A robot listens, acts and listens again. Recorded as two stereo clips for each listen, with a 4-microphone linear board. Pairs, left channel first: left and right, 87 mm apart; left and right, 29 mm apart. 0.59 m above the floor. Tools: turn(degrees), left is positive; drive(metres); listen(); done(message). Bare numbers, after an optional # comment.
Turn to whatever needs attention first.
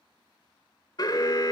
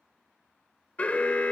# The alarm: about 50° left or 130° left.
turn(50)
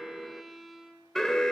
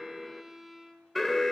done("Facing the alarm.")